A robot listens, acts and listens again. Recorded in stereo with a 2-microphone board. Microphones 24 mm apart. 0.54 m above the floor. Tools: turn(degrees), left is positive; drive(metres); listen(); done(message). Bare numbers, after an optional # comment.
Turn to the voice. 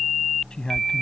# The man speaking: about 35° left or 145° left.
turn(35)
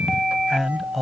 done("Found it: a man speaking, straight ahead.")